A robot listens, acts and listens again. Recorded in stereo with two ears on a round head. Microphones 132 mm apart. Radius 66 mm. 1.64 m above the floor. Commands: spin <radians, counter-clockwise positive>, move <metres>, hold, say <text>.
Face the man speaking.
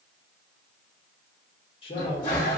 spin 0.70
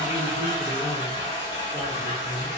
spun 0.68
say Found it: a man speaking, straight ahead, 1 to 2 m away.